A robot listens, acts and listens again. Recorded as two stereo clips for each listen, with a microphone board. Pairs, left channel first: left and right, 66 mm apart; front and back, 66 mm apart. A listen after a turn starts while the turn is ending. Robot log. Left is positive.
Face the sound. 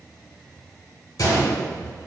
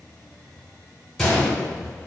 note: The gunshot: 80° left.
cmd yaw +80
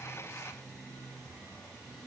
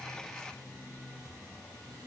end: Facing where the gunshot came from. I can't hear it now.